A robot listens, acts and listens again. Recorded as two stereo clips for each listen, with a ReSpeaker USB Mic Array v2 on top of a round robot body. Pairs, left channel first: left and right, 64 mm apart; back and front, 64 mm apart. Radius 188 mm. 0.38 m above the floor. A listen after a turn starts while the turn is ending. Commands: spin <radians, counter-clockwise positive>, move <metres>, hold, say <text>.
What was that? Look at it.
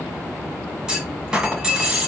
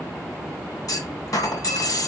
spin -2.88
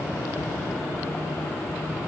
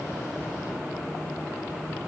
say Facing where the clunk came from. I can't hear it now.